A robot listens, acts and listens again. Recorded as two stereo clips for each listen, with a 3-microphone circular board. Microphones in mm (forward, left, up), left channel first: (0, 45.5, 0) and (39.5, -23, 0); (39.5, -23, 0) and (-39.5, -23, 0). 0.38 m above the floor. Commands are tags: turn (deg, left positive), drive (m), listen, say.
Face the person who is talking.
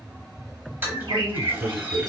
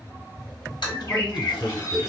<turn deg="-85"/>
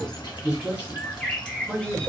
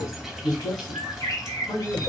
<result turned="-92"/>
<say>Facing the man speaking.</say>